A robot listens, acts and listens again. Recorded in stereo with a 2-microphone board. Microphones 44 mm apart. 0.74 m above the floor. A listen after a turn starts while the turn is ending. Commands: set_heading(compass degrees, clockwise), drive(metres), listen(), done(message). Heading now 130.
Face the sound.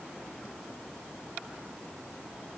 listen()
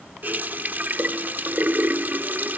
set_heading(175)
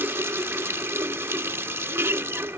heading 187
set_heading(262)
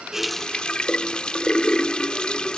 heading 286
set_heading(266)
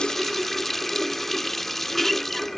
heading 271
done("Found it: a running tap, straight ahead.")